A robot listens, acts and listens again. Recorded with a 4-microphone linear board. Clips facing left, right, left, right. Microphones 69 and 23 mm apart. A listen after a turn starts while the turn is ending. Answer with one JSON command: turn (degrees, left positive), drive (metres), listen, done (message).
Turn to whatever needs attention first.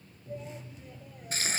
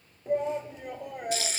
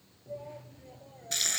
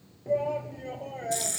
{"turn": -70}
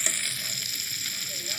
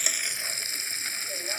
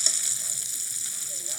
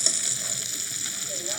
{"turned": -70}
{"listen": true}
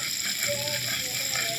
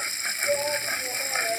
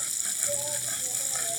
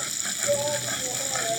{"turn": -35}
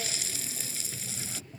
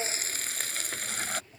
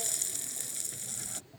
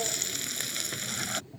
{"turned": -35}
{"done": "Facing the shout."}